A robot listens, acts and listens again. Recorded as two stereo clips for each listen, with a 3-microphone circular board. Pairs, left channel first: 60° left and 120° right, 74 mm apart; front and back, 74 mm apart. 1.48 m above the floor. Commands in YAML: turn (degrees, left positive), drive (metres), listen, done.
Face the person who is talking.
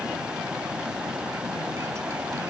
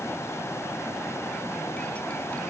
listen: true
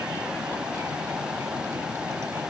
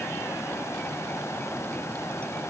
listen: true
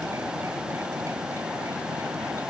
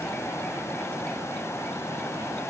done: "I can't make out anyone speaking."